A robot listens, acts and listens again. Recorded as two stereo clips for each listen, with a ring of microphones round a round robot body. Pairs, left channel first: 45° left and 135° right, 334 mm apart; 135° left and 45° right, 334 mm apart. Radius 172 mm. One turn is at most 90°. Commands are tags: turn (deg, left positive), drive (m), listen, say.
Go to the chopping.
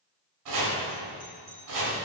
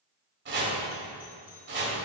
<turn deg="-90"/>
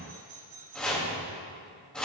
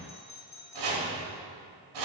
<turn deg="-45"/>
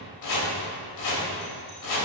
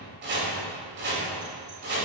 <turn deg="15"/>
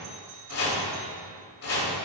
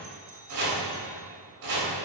<drive m="1.0"/>
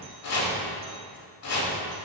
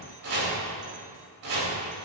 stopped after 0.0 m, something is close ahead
<say>Something is in my way. I am facing the chopping but have not reached it.</say>